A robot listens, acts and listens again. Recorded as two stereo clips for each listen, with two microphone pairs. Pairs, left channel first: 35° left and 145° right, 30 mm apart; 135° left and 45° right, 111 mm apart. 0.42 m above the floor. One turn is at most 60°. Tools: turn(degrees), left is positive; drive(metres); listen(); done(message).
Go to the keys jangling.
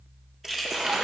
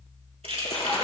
turn(degrees=-55)
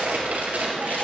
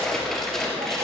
listen()
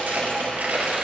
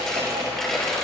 listen()
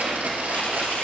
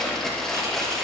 done("I heard keys jangling from this way, but can't make it out now. I did not reach it.")